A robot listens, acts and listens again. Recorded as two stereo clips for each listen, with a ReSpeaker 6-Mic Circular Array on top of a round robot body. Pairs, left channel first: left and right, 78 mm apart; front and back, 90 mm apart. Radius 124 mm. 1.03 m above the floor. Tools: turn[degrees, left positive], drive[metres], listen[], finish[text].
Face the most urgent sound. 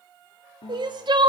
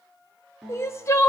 Thought: The crying: 60° right.
Action: turn[-60]
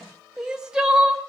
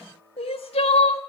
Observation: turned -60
Thought: The crying is now 10° right.
Action: turn[-10]
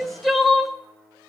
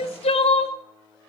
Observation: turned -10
Action: finish[Facing the crying, under 1 m away.]